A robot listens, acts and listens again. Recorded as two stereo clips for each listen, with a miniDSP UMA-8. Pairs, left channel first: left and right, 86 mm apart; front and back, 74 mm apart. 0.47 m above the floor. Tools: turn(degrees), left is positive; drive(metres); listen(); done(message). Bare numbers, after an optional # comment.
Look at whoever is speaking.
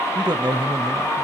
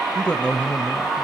# The man speaking: 75° right.
turn(-75)
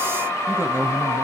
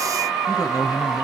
# The man speaking is now 30° right.
turn(-30)
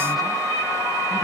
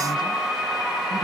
listen()
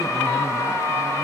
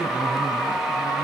listen()
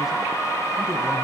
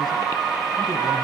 done("I heard a man speaking from this way, but can't make it out now.")